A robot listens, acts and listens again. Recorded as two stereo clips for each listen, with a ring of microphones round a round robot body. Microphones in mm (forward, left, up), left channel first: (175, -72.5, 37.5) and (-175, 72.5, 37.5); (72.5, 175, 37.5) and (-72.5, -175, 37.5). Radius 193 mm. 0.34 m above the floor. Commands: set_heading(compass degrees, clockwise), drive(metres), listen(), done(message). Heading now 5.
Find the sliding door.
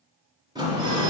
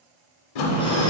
set_heading(285)
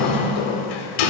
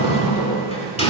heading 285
done("Facing the sliding door, under 1 m away.")